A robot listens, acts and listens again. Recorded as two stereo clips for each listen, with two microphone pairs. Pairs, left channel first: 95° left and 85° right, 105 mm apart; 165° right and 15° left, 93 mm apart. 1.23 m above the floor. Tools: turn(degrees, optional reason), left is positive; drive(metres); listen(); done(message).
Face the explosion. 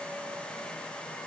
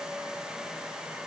listen()
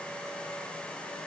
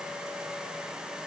listen()
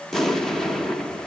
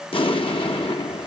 turn(degrees=180, reason="The explosion: straight behind.")
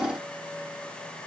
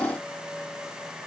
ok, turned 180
done("Facing where the explosion came from. I can't hear it now.")